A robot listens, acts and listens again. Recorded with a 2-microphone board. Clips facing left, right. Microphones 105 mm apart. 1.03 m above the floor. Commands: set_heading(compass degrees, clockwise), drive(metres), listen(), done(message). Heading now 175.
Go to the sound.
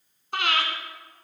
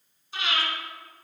set_heading(115)
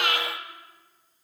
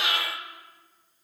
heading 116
set_heading(56)
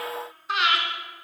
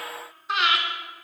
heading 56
drive(1.0)
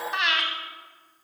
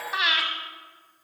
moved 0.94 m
drive(1.0)
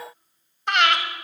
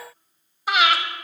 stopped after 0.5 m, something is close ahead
done("Arrived at the breathing, straight ahead.")